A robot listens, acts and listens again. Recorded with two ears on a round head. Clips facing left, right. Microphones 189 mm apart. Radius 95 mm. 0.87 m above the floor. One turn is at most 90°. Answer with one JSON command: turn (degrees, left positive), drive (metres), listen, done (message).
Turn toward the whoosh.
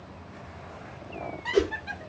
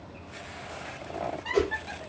{"turn": 20}
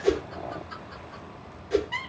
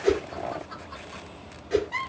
{"done": "Found it: a whoosh, straight ahead, under 1 m away."}